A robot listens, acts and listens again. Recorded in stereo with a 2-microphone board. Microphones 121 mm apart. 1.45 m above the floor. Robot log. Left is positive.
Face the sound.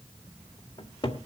note: The cupboard door: about 40° left or 140° left.
cmd yaw +40
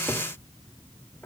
cmd idle
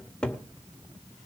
note: So it is at 10° left.
cmd yaw +10
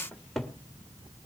end: Facing the cupboard door, 1 to 2 m away.